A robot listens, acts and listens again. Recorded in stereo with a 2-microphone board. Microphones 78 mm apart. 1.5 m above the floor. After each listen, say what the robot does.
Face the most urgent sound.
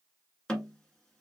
Keep listening.
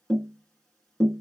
Keep listening.
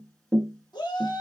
Turn 65° left.
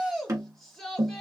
Found it: a shout, straight ahead, 1 to 2 m away.